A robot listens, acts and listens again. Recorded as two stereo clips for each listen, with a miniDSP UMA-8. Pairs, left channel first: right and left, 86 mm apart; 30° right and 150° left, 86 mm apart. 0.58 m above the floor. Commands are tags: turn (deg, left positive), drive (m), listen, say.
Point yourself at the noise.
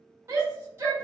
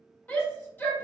<turn deg="35"/>
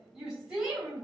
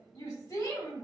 <say>Found it: a shout, straight ahead, 1 to 2 m away.</say>